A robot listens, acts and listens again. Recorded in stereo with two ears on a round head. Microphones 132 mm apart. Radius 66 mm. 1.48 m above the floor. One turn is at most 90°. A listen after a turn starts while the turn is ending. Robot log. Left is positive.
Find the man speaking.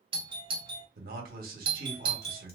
note: The man speaking: about 65° right or 115° right.
cmd yaw -65
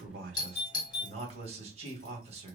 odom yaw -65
note: So it is at 45° right.
cmd yaw -45
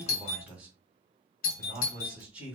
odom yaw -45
note: The man speaking is now 10° right.
cmd yaw -10
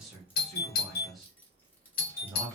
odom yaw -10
end: Facing the man speaking.